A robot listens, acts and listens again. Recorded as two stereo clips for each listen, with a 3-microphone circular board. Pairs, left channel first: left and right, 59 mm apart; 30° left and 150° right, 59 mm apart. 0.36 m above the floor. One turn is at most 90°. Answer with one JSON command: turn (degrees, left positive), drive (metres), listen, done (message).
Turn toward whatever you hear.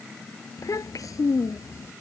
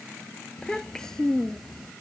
{"turn": 90}
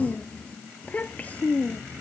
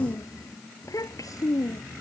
{"turn": 30}
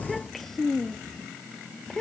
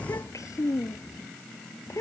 {"turn": 10}
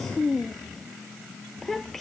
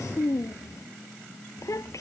{"done": "Facing the child speaking."}